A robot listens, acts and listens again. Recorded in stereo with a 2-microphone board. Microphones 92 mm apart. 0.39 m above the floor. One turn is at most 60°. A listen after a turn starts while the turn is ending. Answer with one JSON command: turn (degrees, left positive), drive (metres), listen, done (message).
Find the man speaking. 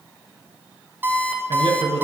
{"turn": -60}
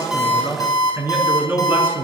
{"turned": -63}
{"turn": -25}
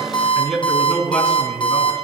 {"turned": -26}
{"turn": 10}
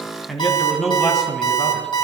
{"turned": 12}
{"done": "Facing the man speaking."}